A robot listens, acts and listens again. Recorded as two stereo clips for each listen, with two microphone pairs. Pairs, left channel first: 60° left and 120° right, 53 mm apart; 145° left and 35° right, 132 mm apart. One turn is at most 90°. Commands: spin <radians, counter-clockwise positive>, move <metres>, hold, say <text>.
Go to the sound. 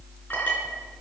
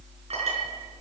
move 1.0
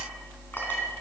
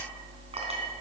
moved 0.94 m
hold
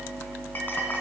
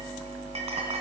move 1.0
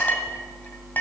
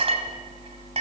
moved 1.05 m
move 1.0
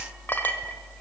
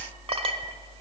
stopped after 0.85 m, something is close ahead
say Arrived at the clink, straight ahead.